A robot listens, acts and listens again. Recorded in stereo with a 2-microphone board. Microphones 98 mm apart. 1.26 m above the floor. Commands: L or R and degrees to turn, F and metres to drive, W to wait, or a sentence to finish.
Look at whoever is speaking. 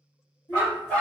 L60
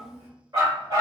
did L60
Found it: a child speaking, straight ahead.